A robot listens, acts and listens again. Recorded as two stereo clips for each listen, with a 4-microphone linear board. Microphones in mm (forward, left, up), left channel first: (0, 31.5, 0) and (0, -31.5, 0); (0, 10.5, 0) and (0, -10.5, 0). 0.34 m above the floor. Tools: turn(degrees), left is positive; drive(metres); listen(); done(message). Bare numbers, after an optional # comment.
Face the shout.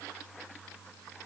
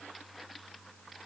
listen()
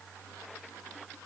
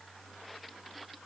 listen()
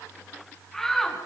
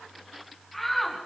turn(30)
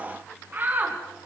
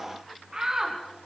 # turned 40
# So it is at 35° right.
turn(-35)
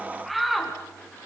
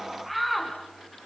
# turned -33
done("Facing the shout, 2 to 4 m away.")